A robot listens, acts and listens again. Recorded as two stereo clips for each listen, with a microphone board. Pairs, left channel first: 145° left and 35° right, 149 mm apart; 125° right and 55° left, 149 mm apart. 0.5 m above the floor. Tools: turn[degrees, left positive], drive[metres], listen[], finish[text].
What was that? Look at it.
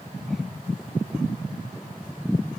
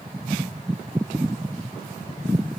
Action: listen[]
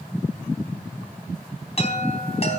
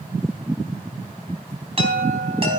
Thought: The chime: 105° left.
Action: turn[105]
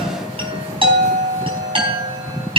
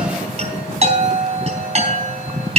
Thought: The chime is now 15° left.
Action: turn[15]
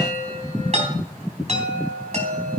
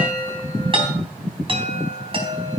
Action: finish[Facing the chime.]